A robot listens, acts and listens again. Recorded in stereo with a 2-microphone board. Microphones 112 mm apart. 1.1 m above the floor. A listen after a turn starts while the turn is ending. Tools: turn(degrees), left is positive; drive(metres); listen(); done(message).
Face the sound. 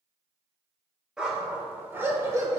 turn(degrees=-30)
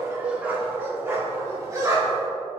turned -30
turn(degrees=-35)
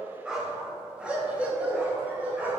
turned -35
turn(degrees=-15)
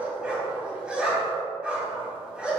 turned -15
turn(degrees=-10)
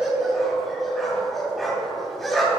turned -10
done("Facing the dog barking.")